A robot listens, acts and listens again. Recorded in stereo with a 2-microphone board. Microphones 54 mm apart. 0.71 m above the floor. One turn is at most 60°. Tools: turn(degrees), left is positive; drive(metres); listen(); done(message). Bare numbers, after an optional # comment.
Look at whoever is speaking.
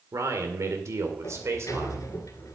# The man speaking: about 55° right or 125° right.
turn(-55)
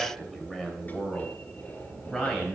# So it is at 10° left.
turn(10)
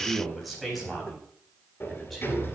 done("Found it: a man speaking, straight ahead, over 4 m away.")